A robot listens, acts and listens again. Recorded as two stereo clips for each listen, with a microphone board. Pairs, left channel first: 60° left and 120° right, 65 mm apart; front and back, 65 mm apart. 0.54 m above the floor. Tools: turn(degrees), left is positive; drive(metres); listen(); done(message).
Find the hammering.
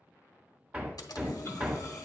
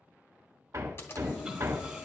turn(degrees=175)
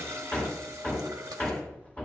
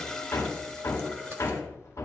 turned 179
done("Facing the hammering.")